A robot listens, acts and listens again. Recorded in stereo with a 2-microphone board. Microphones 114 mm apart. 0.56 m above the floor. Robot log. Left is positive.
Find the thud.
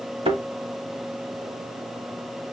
note: The thud: about 55° right or 125° right.
cmd yaw -55
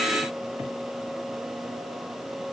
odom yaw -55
cmd idle
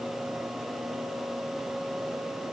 end: I heard a thud, but can't make it out now. It was about straight ahead or 70° right.